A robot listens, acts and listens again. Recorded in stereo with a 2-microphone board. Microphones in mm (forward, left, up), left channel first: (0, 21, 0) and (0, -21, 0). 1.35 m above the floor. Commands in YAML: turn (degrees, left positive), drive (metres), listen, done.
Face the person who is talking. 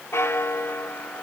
listen: true
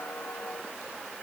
listen: true
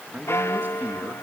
turn: -45
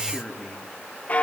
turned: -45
done: "Facing the man speaking."